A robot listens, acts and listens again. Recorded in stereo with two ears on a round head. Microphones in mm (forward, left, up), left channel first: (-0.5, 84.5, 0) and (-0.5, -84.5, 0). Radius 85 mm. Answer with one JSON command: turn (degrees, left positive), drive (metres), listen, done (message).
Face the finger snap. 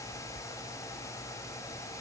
{"listen": true}
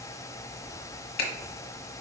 {"turn": 55}
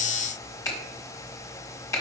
{"turn": 20}
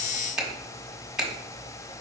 {"done": "Facing the finger snap, 1 to 2 m away."}